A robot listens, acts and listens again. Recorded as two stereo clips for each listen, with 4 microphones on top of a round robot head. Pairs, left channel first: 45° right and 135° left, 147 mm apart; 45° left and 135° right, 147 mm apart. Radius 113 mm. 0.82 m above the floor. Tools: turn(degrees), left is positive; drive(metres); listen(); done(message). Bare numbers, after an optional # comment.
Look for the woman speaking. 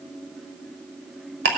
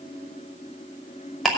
listen()
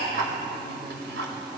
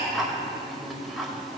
listen()
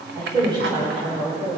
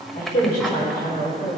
# The woman speaking: 70° left.
turn(70)
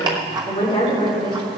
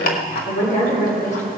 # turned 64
done("Facing the woman speaking, 2 to 4 m away.")